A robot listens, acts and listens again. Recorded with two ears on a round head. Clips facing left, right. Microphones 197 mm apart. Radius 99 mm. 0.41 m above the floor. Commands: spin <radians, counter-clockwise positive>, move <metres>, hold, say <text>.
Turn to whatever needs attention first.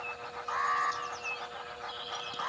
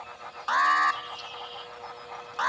spin -1.22
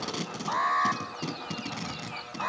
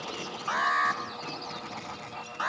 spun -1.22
spin -0.17
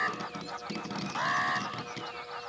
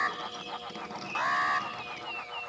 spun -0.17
say Found it: an alarm, straight ahead, 1 to 2 m away.